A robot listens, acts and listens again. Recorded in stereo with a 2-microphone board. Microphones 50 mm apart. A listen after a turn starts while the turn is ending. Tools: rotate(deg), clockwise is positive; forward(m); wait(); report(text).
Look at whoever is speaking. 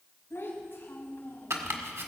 rotate(-40)
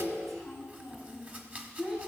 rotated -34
rotate(10)
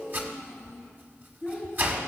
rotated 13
rotate(10)
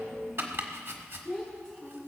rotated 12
report("Facing the child speaking.")